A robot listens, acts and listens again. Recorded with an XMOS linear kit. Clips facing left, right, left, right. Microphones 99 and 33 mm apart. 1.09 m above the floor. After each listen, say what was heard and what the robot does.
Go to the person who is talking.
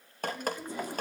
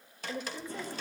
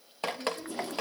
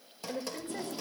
The woman speaking: about 70° right or 110° right. Turn 70° right.
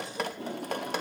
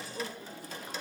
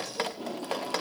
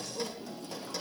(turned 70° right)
Keep listening.
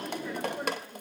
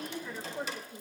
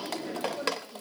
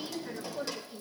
Drive 1.0 m forward.
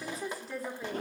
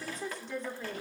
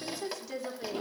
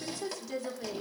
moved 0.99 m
Drive 1.0 m forward.
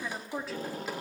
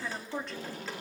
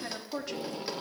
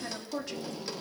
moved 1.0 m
Drive 1.0 m forward.
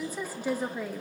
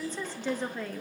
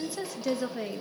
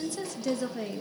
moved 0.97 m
The woman speaking is now 10° left. Turn 10° left.
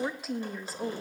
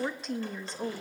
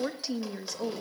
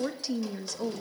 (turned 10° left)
Drive 1.0 m forward.
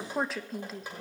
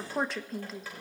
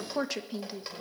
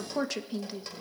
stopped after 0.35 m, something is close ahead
Arrived at the woman speaking, straight ahead.